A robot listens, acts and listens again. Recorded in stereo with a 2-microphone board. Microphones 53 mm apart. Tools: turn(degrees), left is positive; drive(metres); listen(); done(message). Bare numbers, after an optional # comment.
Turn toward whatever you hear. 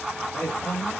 # The man speaking: about 25° left or 155° left.
turn(25)
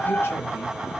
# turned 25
listen()
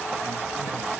listen()
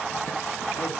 done("I heard a man speaking, but can't make it out now. It was about straight ahead or 130° left.")